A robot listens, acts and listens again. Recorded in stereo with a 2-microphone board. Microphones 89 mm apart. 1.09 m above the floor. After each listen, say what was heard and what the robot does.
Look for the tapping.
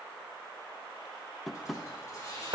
Turn 30° left.
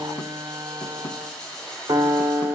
Keep listening.
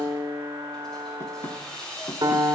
Keep listening.
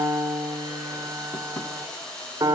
I heard tapping, but can't make it out now. It was about 30° right or 150° left.